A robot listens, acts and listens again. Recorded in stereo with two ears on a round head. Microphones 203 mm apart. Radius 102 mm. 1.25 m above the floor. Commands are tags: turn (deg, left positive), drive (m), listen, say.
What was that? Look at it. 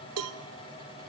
<turn deg="-70"/>
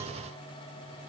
<listen/>
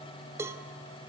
<turn deg="-10"/>
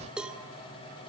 <say>Facing the cowbell, 1 to 2 m away.</say>